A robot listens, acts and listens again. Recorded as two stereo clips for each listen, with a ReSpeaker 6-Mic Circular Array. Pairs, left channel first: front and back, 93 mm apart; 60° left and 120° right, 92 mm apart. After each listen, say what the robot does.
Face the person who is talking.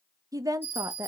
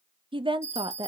Turn 135° right.
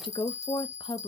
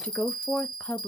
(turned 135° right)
Turn 15° right.
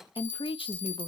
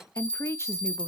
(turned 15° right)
Facing the woman speaking, under 1 m away.